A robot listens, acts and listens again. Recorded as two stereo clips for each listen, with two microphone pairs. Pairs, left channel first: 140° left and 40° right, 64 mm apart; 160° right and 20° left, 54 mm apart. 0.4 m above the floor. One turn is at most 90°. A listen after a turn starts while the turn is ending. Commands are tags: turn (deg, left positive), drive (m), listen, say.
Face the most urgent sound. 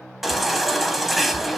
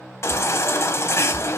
<turn deg="-90"/>
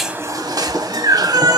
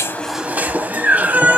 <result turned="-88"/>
<turn deg="-40"/>
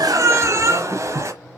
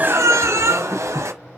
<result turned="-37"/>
<say>Facing the baby crying, under 1 m away.</say>